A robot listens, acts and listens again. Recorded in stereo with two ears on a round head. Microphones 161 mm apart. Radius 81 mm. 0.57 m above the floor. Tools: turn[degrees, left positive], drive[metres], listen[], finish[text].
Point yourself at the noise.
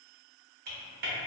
Thought: The typing on a keyboard: about 55° right or 125° right.
Action: turn[-55]
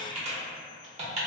Thought: So it is at 45° right.
Action: turn[-45]
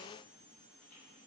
Action: listen[]
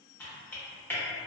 Thought: The typing on a keyboard is now 15° left.
Action: turn[15]
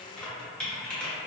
Action: finish[Found it: typing on a keyboard, straight ahead.]